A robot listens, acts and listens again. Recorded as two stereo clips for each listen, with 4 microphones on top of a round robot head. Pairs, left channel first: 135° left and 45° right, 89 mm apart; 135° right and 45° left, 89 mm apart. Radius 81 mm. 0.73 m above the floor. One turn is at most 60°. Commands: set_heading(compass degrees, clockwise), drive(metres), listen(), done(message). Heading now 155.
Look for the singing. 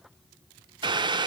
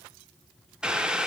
listen()
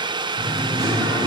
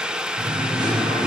set_heading(145)
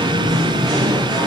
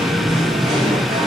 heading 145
done("Facing the singing, 2 to 4 m away.")